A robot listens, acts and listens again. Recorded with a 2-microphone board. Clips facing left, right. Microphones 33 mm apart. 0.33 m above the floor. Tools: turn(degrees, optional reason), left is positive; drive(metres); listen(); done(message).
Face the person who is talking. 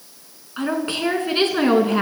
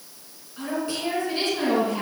turn(degrees=55, reason="The woman speaking: about 55° left or 125° left.")
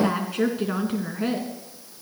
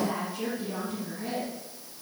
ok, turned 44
turn(degrees=80, reason="So it is at 80° left.")
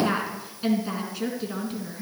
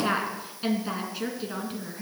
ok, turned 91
turn(degrees=-10, reason="The woman speaking is now 10° right.")
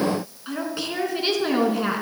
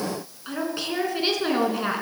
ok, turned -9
done("Facing the woman speaking, 2 to 4 m away.")